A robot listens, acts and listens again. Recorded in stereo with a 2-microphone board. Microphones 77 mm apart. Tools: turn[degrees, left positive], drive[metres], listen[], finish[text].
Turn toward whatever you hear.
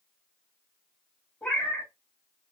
Thought: The cat meowing: about 15° left or 165° left.
Action: turn[15]
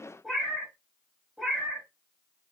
Action: finish[Facing the cat meowing, 1 to 2 m away.]